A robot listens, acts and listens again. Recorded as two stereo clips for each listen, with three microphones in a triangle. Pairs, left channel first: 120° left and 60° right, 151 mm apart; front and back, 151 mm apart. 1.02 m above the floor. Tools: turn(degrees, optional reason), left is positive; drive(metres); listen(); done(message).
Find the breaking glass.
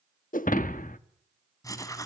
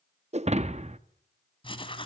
turn(degrees=140, reason="The breaking glass: 140° left.")
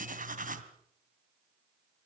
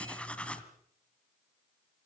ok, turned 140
done("I heard breaking glass from this way, but can't make it out now.")